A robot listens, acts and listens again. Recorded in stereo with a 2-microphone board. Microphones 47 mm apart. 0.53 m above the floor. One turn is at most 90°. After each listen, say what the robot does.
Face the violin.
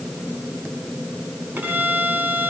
Turn 45° right.
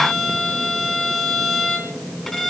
Found it: a violin, straight ahead.